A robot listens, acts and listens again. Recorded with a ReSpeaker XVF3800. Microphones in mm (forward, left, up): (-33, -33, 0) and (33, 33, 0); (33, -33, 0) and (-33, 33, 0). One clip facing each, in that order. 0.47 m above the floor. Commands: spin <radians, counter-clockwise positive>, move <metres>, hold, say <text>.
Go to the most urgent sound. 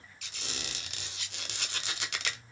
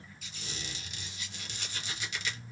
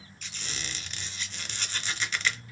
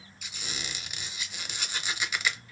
hold
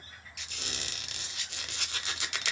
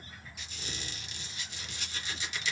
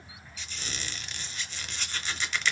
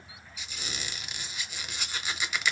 hold
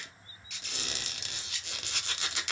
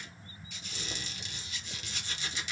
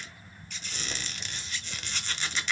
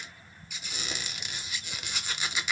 say I can't make out anything urgent, only a squeak.